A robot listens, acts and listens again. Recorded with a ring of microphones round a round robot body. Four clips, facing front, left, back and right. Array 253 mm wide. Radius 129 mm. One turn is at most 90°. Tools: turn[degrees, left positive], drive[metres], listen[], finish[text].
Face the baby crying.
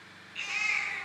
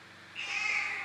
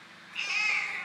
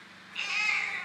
Thought: The baby crying: 110° right.
Action: turn[-90]
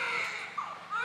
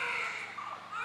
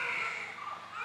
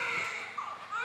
Thought: The baby crying is now 35° right.
Action: turn[-35]
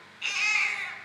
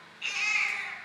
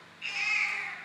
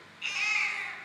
Action: finish[Found it: a baby crying, straight ahead.]